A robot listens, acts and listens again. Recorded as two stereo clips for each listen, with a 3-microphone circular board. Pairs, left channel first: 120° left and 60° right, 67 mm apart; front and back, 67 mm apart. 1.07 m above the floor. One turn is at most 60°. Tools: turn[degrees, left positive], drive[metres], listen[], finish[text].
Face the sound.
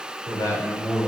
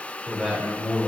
Thought: The man speaking: 95° left.
Action: turn[60]
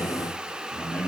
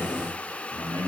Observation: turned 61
Thought: The man speaking is now 45° left.
Action: turn[45]
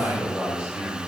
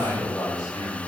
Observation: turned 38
Thought: The man speaking is now 10° left.
Action: turn[10]
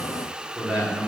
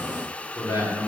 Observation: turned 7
Thought: The man speaking is now 10° left.
Action: turn[10]
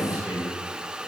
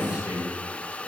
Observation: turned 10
Action: finish[Facing the man speaking.]